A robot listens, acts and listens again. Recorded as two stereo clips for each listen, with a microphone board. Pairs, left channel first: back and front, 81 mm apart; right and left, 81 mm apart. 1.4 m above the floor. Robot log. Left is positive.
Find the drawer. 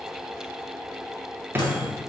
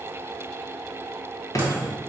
note: The drawer: 60° right.
cmd yaw -60
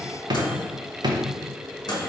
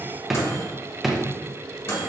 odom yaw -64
end: Found it: a drawer, straight ahead, under 1 m away.